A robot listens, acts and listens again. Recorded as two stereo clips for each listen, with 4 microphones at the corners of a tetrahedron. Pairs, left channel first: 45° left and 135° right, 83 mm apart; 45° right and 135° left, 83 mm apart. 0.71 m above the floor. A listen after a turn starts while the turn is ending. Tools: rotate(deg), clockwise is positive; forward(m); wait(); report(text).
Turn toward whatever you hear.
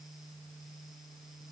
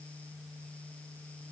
wait()
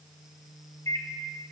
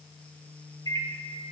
report("Facing the microwave.")